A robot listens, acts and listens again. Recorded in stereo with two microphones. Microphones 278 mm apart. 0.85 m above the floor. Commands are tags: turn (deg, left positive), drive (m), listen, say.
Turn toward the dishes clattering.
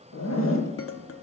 <turn deg="50"/>
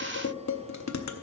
<turn deg="80"/>
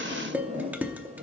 <say>Facing the dishes clattering, under 1 m away.</say>